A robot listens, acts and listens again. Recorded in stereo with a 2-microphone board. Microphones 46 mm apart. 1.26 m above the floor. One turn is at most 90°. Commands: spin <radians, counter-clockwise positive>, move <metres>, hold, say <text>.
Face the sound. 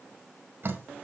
spin -0.79
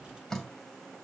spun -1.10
spin 0.17
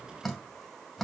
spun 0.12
say Found it: dripping, straight ahead, 2 to 4 m away.